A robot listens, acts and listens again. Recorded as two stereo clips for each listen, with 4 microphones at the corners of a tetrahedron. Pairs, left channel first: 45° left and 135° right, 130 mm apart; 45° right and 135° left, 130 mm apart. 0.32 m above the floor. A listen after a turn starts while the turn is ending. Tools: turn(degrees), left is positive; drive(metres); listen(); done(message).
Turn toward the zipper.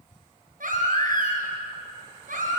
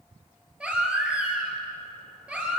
listen()
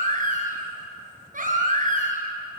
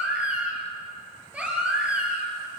listen()
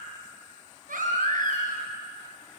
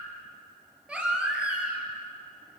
done("I can't make out a zipper to turn to.")